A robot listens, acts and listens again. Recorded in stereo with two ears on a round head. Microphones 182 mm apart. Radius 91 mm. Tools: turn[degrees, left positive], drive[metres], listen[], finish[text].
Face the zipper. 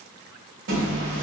Thought: The zipper: about 65° right or 115° right.
Action: turn[-65]
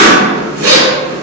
Thought: So it is at 45° right.
Action: turn[-45]
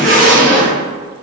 Thought: The zipper is now 35° right.
Action: turn[-35]
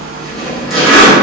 Action: finish[Facing the zipper, 1 to 2 m away.]